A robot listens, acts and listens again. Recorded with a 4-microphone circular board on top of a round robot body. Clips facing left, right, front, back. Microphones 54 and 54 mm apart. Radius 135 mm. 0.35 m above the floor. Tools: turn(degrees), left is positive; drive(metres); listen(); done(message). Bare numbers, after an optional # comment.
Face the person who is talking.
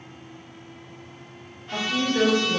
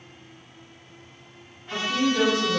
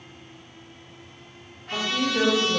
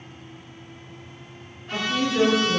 # The woman speaking: 85° right.
turn(-85)
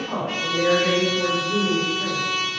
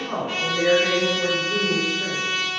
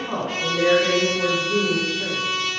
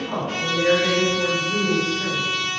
# The woman speaking is now 15° right.
turn(-15)
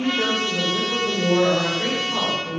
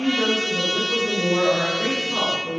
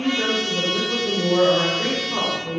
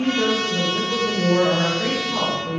done("Facing the woman speaking, 1 to 2 m away.")